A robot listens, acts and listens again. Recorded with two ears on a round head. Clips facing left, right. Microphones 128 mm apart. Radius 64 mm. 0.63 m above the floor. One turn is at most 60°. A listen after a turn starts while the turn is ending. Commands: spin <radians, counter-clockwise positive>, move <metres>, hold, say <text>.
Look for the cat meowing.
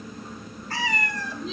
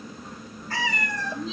spin -1.05
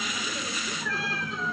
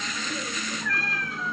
spin 0.17
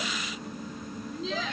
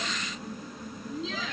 hold
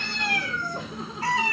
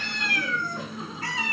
spin 0.70
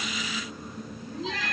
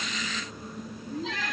spin 0.17
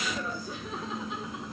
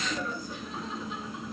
hold
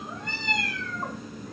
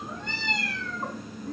say Found it: a cat meowing, straight ahead, 2 to 4 m away.